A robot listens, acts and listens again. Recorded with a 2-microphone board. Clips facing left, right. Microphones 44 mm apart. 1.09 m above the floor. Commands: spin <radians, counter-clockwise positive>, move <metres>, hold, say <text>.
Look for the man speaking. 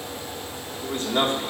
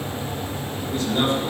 spin 0.87
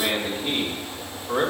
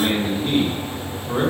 say Found it: a man speaking, straight ahead.